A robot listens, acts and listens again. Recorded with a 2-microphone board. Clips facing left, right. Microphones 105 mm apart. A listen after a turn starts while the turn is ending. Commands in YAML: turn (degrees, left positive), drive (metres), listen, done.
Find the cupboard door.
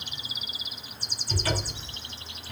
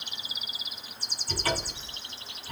turn: -45
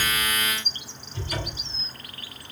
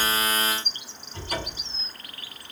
turn: -85
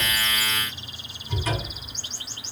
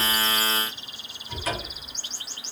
done: "Found it: a cupboard door, straight ahead, 2 to 4 m away."